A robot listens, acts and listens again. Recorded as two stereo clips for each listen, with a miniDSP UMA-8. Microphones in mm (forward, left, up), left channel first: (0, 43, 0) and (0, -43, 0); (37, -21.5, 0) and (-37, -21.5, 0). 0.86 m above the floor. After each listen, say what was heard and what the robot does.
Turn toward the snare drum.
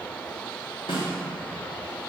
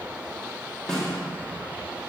The snare drum: 85° left. Turn 85° left.
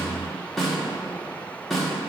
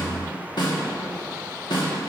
Facing the snare drum, 1 to 2 m away.